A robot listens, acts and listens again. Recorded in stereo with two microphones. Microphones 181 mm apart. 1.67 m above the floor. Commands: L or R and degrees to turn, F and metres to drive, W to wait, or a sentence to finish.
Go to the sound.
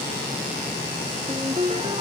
R35
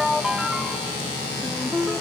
F1.0
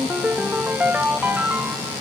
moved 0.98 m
R10
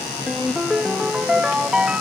F1.0
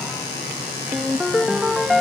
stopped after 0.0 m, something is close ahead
I am next to the ringtone.